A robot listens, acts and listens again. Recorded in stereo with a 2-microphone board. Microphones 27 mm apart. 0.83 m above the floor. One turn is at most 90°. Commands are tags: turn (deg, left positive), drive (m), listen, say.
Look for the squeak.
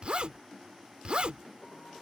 <listen/>
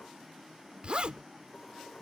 <listen/>
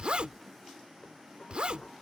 <say>I can't make out a squeak to turn to.</say>